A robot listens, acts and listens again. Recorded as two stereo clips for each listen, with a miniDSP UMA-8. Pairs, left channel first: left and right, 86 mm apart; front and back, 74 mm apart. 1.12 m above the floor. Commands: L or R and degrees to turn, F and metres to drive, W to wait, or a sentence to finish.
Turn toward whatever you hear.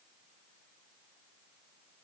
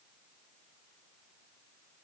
W
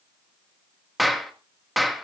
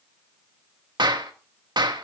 L180
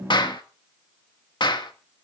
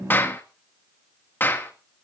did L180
L60
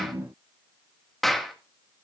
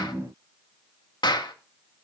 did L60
Found it: a clap, straight ahead.